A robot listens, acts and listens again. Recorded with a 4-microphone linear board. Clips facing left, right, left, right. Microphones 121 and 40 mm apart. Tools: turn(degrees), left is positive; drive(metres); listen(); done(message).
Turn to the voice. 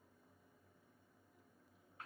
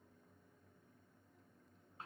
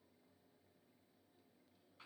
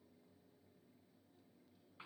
listen()
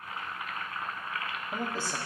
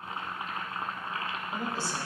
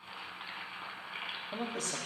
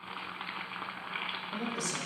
turn(degrees=50)
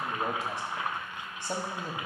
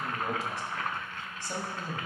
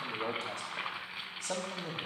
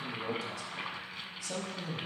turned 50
turn(degrees=70)
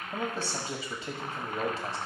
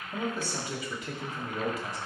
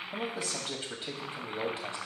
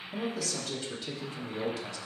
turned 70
turn(degrees=35)
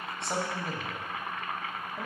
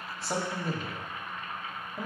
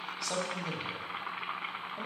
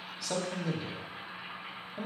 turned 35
done("Found it: a man speaking, straight ahead.")